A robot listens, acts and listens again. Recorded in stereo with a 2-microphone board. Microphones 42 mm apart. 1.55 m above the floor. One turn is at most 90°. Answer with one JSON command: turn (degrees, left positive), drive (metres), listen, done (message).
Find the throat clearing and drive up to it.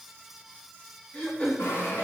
{"turn": 40}
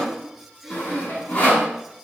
{"drive": 1.0}
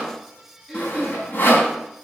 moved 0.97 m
{"drive": 1.0}
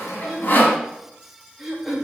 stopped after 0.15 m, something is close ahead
{"done": "Something is in my way. I am facing the throat clearing but have not reached it."}